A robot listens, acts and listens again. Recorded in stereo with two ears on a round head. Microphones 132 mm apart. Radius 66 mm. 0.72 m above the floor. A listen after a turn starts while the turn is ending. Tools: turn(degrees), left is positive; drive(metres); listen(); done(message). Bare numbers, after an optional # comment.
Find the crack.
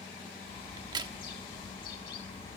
# The crack: about 30° right or 150° right.
turn(-30)
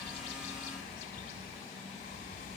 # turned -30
listen()
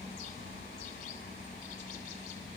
done("I heard a crack, but can't make it out now. It was about straight ahead or 120° right.")